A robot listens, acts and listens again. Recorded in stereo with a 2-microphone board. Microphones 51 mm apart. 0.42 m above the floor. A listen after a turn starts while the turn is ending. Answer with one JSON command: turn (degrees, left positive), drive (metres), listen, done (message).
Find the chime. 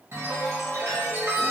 {"turn": -55}
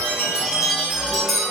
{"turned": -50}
{"turn": -10}
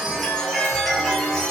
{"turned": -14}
{"done": "Found it: a chime, straight ahead, under 1 m away."}